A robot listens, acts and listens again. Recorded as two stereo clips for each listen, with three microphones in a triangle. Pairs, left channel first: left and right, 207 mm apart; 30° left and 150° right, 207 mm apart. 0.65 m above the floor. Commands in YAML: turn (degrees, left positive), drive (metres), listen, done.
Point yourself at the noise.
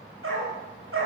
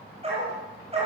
turn: -90
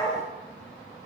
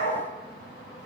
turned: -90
done: "Facing the dog barking."